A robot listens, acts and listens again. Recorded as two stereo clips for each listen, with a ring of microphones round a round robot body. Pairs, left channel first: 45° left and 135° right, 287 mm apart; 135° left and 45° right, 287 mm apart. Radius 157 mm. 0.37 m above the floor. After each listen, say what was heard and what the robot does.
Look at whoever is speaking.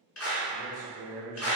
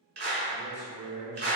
The man speaking: 170° left. Turn 170° left.
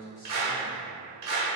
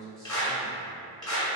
The man speaking is now 15° left. Turn 15° left.
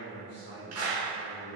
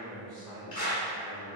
Found it: a man speaking, straight ahead.